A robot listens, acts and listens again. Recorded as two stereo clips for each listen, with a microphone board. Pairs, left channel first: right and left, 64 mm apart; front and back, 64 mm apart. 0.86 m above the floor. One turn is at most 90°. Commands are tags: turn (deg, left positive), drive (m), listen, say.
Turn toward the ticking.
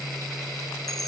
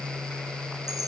<listen/>
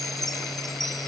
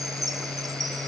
<listen/>
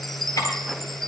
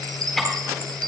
<turn deg="-80"/>
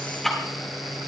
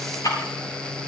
<say>Facing the ticking.</say>